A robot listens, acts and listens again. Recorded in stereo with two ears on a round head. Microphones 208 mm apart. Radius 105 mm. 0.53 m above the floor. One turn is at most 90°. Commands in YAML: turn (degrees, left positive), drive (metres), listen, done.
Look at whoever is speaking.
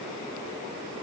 listen: true
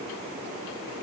listen: true
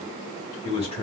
turn: 25
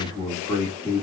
turn: 25
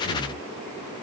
turn: 20
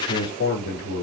turn: 35
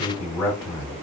turn: 20
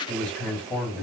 done: "Found it: a man speaking, straight ahead."